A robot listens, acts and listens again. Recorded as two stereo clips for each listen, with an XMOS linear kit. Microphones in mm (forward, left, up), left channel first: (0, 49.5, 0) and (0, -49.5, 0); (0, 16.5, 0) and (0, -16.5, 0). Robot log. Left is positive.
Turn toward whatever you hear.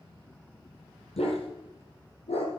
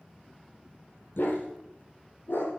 cmd yaw +90
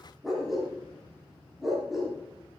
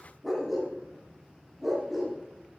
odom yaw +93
end: Facing the dog barking.